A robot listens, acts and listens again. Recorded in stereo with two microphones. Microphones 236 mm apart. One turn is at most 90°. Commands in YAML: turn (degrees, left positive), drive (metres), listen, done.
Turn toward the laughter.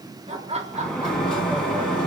turn: -25
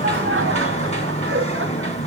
listen: true
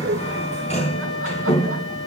turn: -90
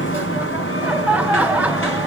done: "Facing the laughter."